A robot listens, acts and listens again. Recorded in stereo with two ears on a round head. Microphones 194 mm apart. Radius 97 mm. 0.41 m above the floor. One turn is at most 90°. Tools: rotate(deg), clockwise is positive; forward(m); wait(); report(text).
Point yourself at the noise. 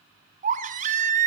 rotate(35)
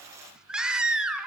report("Facing the baby crying.")